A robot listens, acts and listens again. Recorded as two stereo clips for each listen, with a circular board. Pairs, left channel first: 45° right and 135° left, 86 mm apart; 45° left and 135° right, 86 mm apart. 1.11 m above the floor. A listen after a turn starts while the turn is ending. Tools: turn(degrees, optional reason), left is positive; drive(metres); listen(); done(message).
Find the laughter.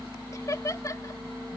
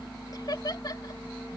done("Facing the laughter.")